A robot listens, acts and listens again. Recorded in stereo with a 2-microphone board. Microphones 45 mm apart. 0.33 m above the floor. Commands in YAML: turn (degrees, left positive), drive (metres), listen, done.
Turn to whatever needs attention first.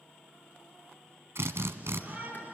turn: -35
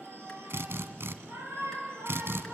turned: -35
turn: -110
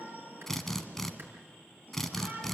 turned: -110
turn: -35
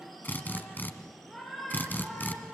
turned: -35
done: "Facing the shout, over 4 m away."